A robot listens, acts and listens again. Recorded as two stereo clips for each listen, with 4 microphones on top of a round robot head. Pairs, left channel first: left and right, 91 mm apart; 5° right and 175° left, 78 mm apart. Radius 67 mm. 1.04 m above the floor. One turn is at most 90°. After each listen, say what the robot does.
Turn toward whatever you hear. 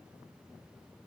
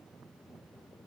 Keep listening.
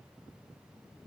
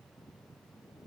Keep listening.
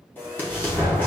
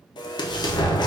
Turn 20° left.
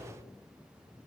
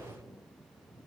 I heard an explosion from this way, but can't make it out now.